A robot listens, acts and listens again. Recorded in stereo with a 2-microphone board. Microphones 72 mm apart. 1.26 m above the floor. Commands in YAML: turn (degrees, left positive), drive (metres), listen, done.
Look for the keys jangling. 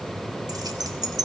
turn: -90
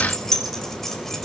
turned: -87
done: "Facing the keys jangling."